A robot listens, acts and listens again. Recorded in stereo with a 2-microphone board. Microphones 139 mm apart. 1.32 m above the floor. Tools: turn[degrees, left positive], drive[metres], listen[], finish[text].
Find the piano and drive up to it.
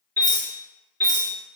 Thought: The piano: about 35° right or 145° right.
Action: turn[-35]
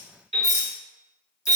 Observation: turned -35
Thought: So it is at 105° right.
Action: turn[-105]
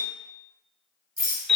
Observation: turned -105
Action: drive[1.0]
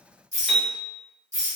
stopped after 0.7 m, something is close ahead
Action: finish[I am next to the piano.]